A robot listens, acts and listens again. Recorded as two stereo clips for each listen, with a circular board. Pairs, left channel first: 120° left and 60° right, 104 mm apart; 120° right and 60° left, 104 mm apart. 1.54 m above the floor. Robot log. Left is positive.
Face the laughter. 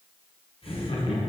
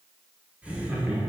note: The laughter: 135° left.
cmd yaw +135
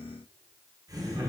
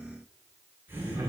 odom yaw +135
note: The laughter is now 10° right.
cmd yaw -10
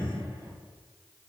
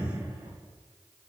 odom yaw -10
end: Found it: laughter, straight ahead, 1 to 2 m away.